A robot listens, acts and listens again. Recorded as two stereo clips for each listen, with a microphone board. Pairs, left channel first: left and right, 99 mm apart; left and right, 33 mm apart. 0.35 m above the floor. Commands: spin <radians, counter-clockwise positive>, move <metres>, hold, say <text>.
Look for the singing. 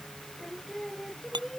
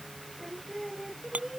spin 0.52
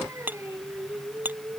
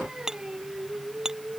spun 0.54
spin -0.52
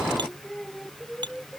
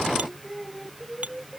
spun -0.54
say Facing the singing.